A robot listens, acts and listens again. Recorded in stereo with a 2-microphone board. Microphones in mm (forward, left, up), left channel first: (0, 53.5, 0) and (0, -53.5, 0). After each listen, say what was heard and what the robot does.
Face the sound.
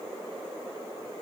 Keep listening.
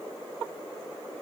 Keep listening.
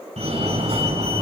The fire alarm: about 70° right or 110° right. Turn 70° right.
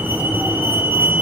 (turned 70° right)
So it is at 10° right. Turn 10° right.
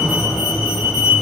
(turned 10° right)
Facing the fire alarm, over 4 m away.